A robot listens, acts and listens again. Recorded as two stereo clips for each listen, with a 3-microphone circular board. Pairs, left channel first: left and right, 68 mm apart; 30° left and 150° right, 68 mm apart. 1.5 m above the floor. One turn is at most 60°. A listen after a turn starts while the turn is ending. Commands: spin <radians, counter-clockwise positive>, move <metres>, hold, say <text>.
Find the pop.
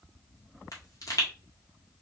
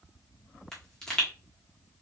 spin 1.05
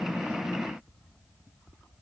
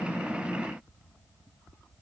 spin 0.87
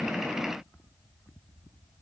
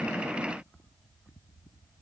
say I heard a pop from this way, but can't make it out now.